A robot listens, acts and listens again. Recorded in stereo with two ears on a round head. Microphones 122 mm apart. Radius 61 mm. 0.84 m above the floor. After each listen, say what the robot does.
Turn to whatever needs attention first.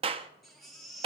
Turn 30° left.
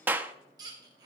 Turn 30° right.
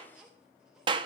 Found it: a baby crying, straight ahead, 1 to 2 m away.